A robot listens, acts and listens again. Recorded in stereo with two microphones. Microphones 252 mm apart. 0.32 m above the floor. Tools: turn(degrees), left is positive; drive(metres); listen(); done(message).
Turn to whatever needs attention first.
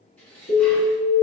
turn(degrees=45)
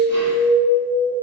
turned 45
turn(degrees=85)
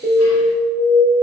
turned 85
turn(degrees=35)
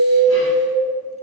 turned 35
turn(degrees=10)
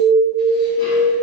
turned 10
done("Found it: an alarm, straight ahead, 1 to 2 m away.")